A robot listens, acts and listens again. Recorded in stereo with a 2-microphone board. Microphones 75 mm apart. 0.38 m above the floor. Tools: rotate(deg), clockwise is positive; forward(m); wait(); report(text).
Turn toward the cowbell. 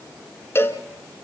rotate(-35)
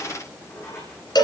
rotate(-105)
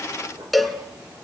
report("Facing the cowbell, 1 to 2 m away.")